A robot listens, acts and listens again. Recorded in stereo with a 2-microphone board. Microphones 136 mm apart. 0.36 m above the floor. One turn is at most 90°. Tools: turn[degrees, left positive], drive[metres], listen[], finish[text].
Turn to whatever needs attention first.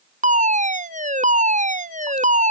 Thought: The fire alarm: about 65° right or 115° right.
Action: turn[-65]
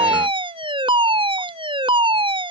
Thought: So it is at 40° right.
Action: turn[-40]
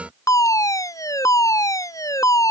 Thought: The fire alarm is now 25° left.
Action: turn[25]
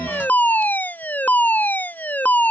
Thought: The fire alarm is now 15° left.
Action: turn[15]
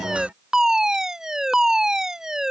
Action: finish[Found it: a fire alarm, straight ahead.]